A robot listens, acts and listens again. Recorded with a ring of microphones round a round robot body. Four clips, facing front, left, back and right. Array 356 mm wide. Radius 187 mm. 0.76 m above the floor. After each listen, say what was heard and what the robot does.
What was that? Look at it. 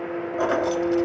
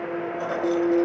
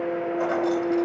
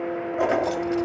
The keys jangling: 55° right. Turn 55° right.
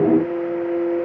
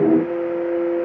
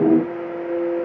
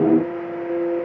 Keep listening.
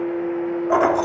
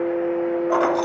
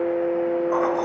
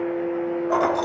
The keys jangling is now 10° left. Turn 10° left.
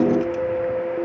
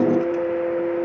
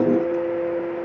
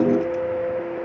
Keep listening.
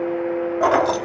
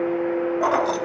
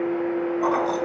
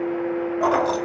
Facing the keys jangling, 1 to 2 m away.